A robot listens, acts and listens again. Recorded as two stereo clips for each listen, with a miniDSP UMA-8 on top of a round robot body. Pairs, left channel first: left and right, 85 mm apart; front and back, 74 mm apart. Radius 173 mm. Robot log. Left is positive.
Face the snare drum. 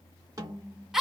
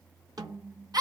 note: The snare drum: 145° right.
cmd yaw -145
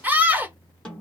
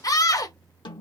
note: The snare drum is now 10° left.
cmd yaw +10
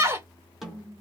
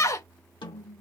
end: Facing the snare drum.